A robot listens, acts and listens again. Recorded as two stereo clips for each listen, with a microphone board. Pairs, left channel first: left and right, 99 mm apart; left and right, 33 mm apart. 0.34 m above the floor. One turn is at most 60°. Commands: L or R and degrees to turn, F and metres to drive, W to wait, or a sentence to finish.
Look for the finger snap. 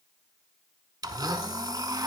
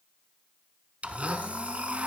W
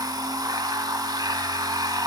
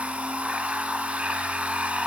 W
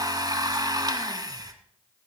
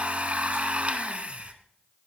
I can't make out a finger snap to turn to.